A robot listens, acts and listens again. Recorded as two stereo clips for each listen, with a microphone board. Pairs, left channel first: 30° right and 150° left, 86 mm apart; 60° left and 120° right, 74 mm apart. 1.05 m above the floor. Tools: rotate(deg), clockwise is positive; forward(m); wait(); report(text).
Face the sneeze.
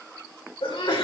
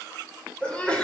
rotate(15)
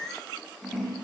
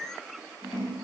report("I heard a sneeze from this way, but can't make it out now.")